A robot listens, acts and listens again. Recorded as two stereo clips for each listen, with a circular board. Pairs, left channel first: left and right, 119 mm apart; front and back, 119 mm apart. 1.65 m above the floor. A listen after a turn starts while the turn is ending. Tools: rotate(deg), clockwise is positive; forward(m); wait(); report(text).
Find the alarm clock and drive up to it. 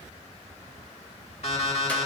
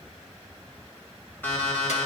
rotate(-70)
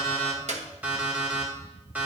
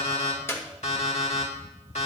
rotate(15)
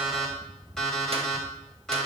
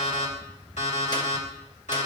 forward(1.0)
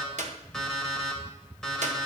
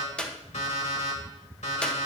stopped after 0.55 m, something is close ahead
report("Something is in my way. I am facing the alarm clock but have not reached it.")